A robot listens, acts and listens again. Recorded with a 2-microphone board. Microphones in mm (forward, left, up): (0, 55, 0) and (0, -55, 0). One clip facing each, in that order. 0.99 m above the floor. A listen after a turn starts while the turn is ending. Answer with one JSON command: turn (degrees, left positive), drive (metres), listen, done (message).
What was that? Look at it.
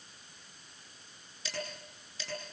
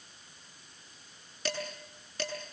{"turn": -90}
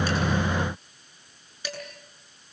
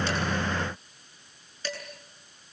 {"turn": 15}
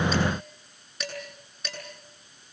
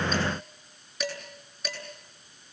{"done": "Facing the dishes clattering."}